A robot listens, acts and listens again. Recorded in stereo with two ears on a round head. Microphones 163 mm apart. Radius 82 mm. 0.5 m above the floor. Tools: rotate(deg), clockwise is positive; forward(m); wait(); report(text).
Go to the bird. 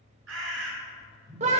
rotate(75)
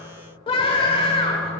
wait()
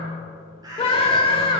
rotate(20)
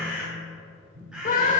forward(1.0)
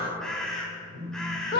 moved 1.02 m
forward(1.0)
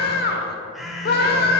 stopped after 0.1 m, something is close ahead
report("Arrived at the bird, straight ahead.")